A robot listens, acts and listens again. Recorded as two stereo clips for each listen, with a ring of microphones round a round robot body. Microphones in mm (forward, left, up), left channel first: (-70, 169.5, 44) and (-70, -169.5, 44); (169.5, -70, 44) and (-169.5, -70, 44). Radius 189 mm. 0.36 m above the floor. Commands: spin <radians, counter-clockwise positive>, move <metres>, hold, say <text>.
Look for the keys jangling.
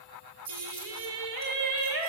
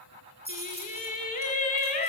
spin -1.92
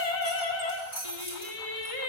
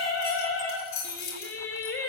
spin 0.44
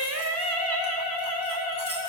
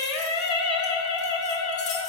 hold
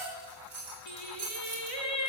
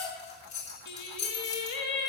say Facing the keys jangling.